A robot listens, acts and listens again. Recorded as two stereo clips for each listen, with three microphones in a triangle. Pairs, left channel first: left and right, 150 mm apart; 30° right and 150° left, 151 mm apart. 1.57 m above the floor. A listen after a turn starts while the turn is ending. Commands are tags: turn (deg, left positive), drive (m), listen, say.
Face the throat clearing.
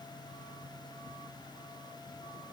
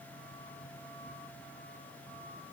<listen/>
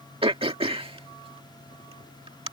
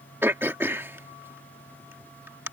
<turn deg="-135"/>
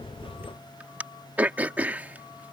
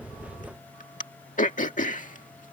<turn deg="-10"/>
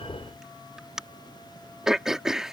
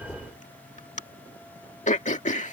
<say>Facing the throat clearing.</say>